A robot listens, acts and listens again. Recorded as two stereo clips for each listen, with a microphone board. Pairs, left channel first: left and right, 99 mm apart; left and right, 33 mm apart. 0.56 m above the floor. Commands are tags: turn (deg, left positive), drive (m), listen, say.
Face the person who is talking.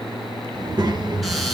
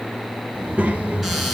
<turn deg="-45"/>
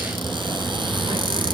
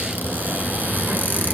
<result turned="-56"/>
<listen/>
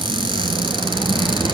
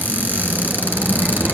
<turn deg="-75"/>
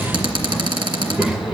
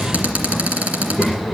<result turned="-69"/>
<turn deg="-10"/>
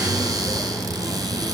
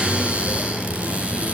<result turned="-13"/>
<say>Found it: a child speaking, straight ahead.</say>